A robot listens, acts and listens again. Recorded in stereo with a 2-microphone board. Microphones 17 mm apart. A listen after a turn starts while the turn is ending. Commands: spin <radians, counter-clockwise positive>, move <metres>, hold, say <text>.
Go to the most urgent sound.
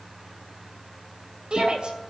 spin -1.31
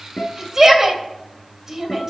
spin -0.44
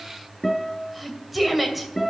move 1.0
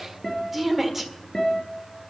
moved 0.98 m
spin -0.17
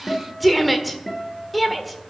move 1.0
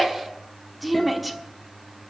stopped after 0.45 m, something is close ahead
say Arrived at the shout, straight ahead.